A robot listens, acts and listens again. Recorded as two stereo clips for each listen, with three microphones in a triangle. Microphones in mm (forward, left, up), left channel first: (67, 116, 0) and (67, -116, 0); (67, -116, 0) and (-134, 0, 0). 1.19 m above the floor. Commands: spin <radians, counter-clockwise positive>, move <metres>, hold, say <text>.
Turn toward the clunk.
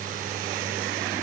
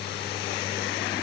hold
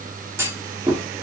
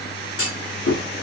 spin -0.17
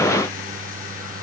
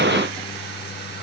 say Facing where the clunk came from. I can't hear it now.